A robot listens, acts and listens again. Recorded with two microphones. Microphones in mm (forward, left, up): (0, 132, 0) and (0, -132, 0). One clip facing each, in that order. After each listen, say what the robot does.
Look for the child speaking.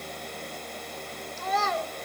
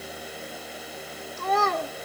Turn 60° right.
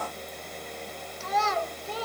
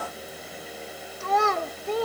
Turn 60° right.
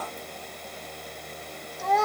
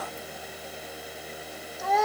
Found it: a child speaking, straight ahead, under 1 m away.